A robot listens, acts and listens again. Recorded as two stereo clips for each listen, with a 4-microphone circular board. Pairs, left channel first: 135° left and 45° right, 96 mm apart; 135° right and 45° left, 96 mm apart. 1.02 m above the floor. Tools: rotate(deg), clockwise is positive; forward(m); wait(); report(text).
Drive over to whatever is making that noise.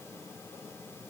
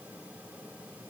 wait()
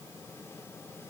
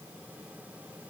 wait()
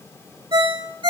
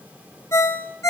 rotate(75)
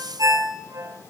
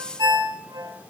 rotate(-10)
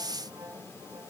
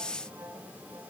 wait()
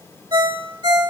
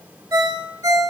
forward(1.0)
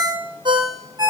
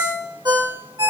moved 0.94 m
forward(1.0)
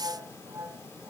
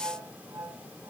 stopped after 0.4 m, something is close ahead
wait()
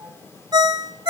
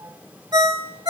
report("I am next to the ringtone.")